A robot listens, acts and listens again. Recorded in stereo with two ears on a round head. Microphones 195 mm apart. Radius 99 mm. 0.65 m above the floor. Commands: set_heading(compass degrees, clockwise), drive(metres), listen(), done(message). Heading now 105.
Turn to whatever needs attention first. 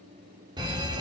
set_heading(125)
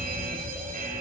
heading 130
set_heading(260)
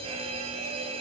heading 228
set_heading(258)
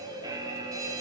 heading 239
set_heading(259)
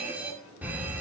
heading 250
set_heading(260)
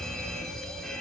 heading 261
done("Facing the fire alarm.")